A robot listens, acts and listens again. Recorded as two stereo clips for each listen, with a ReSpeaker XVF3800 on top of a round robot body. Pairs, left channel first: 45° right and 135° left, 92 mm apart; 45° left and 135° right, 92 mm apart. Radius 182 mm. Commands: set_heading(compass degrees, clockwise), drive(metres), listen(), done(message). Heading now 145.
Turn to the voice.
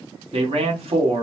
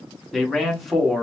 set_heading(10)
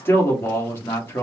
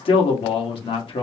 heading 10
set_heading(350)
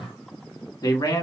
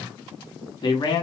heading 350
done("Found it: a man speaking, straight ahead.")